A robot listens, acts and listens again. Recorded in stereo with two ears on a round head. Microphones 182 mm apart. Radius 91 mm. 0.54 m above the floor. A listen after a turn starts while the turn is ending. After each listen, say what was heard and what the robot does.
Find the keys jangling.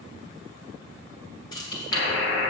The keys jangling: about 20° left or 160° left. Turn 20° left.
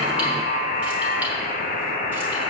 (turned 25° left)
Keep listening.
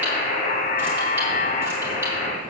Keep listening.
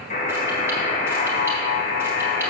I heard keys jangling, but can't make it out now. It was about 5° right or 135° left.